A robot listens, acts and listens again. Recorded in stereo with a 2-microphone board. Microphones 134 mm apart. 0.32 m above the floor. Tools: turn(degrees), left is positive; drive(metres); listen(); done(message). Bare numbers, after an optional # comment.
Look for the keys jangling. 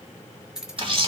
turn(-30)
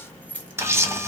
# So it is at 10° left.
turn(10)
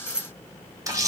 done("Facing the keys jangling, 1 to 2 m away.")